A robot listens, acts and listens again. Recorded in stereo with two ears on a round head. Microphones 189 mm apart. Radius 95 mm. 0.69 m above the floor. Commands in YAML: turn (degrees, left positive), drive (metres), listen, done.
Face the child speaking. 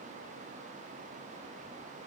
listen: true
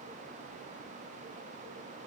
listen: true
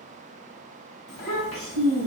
turn: 30
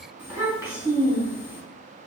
turn: -10
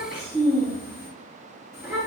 done: "Facing the child speaking."